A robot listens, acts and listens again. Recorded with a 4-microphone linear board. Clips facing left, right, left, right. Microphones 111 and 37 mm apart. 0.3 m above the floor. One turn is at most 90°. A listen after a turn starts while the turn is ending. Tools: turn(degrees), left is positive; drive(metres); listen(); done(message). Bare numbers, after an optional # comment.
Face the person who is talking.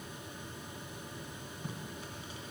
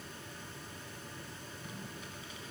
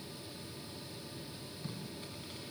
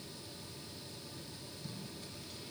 listen()
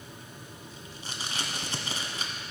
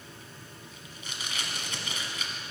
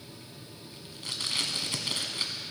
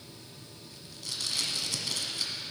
listen()
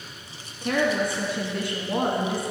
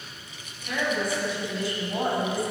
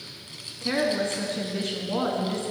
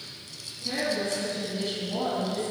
# The woman speaking: about 60° left or 120° left.
turn(60)
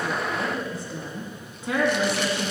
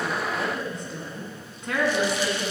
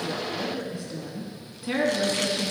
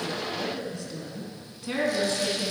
done("Found it: a woman speaking, straight ahead.")